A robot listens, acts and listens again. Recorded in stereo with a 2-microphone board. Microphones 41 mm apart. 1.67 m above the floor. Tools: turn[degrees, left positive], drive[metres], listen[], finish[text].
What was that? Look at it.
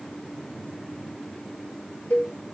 Thought: The cowbell: about 50° left or 130° left.
Action: turn[50]
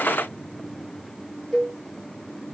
Thought: So it is at 15° left.
Action: turn[15]
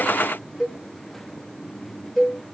Action: finish[Facing the cowbell.]